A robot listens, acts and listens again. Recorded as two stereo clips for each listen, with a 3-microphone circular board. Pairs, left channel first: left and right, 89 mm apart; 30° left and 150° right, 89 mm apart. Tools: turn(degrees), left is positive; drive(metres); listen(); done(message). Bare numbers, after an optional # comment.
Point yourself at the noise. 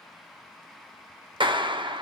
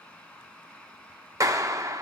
# The clap: 100° right.
turn(-100)
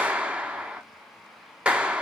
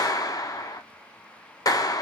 # The clap is now 15° right.
turn(-15)
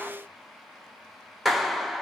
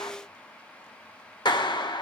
done("Found it: a clap, straight ahead.")